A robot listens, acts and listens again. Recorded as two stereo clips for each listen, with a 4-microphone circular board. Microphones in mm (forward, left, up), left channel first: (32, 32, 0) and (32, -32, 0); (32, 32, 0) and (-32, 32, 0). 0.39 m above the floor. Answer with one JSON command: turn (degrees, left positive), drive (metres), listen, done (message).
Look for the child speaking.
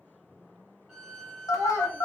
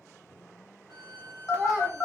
{"turn": 105}
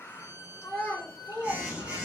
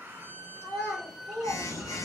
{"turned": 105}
{"turn": 50}
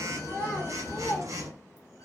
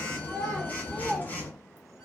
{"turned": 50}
{"turn": 60}
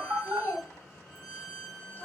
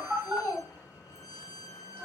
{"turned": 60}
{"turn": 25}
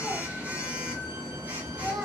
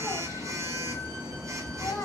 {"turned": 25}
{"listen": true}
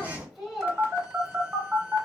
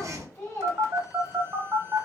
{"turn": -15}
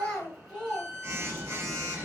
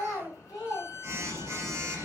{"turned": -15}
{"done": "Found it: a child speaking, straight ahead, 1 to 2 m away."}